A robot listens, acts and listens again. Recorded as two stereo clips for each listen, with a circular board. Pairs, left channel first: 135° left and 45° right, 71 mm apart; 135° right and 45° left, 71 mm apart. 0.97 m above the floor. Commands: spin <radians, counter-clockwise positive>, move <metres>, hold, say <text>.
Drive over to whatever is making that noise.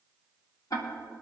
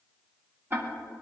spin 1.75
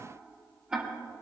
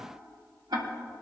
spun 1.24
spin 0.52
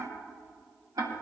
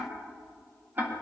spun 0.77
spin -0.26
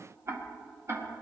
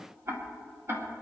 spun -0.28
move 1.0
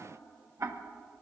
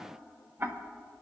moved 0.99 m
move 1.0
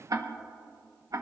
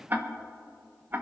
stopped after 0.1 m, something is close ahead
spin -0.26
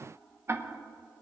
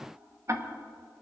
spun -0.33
say Arrived at the ticking, straight ahead.